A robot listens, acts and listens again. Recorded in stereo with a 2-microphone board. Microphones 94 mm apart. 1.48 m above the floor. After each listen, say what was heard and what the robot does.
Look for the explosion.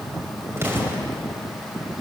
The explosion: about 25° right or 155° right. Turn 25° right.
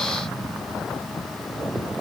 Keep listening.
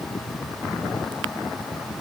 I heard an explosion, but can't make it out now. It was about straight ahead or 130° right.